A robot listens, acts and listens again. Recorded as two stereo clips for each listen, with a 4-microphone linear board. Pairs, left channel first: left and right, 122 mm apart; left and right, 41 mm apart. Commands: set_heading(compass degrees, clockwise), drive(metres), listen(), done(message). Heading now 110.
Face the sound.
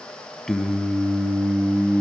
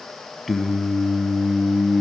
set_heading(125)
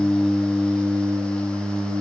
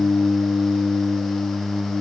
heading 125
set_heading(155)
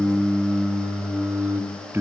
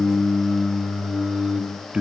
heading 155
set_heading(175)
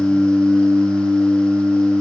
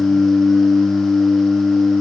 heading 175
set_heading(205)
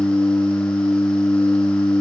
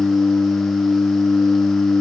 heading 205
set_heading(185)
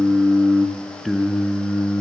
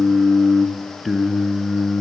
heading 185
done("Facing the singing.")